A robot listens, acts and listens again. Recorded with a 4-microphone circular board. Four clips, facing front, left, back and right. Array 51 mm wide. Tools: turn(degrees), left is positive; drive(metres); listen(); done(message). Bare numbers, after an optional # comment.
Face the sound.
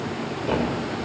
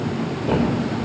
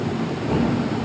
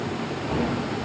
# The thud: 40° left.
turn(40)
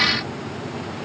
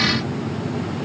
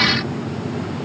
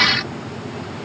done("I heard a thud from this way, but can't make it out now.")